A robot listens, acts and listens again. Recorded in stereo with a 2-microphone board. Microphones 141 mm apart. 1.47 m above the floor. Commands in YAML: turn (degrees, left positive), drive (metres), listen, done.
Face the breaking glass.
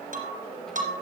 turn: -60
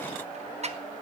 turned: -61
listen: true
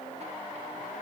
done: "I heard breaking glass, but can't make it out now. It was about straight ahead or 55° right."